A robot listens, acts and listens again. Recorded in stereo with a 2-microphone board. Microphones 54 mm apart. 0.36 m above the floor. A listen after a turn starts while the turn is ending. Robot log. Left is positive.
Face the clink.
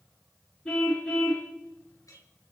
note: The clink: about 75° left or 105° left.
cmd yaw +75
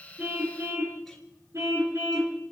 cmd idle
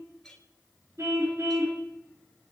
end: Facing the clink, over 4 m away.